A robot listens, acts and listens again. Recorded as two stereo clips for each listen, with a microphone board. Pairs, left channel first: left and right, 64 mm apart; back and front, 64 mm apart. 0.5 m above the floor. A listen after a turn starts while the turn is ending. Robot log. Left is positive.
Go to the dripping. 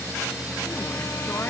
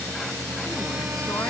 cmd idle
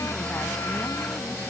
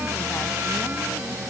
cmd idle
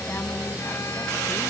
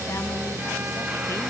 end: I can't make out dripping to turn to.